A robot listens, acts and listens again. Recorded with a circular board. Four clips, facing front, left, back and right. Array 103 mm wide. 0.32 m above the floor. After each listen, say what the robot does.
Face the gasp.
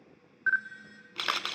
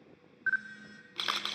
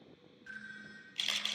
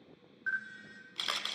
Keep listening.
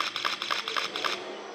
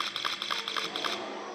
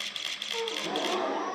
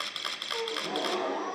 Turn 150° right.
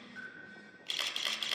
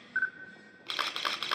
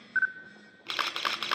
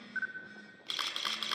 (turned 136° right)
Turn 15° right.
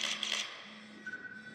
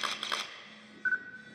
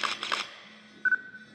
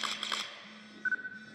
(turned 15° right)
I heard a gasp from this way, but can't make it out now.